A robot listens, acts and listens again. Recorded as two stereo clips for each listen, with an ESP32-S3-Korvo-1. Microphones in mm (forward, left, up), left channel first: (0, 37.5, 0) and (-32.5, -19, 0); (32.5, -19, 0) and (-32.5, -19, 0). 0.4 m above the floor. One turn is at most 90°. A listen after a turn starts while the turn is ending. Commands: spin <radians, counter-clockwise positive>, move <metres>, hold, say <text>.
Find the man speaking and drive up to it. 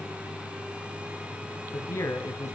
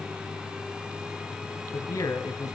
spin 0.35
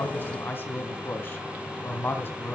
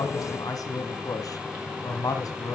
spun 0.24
move 1.0
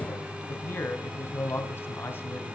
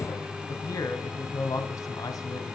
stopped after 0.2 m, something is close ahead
spin 0.17
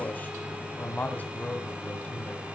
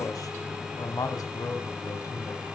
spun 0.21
say Blocked. The man speaking is further on, straight ahead.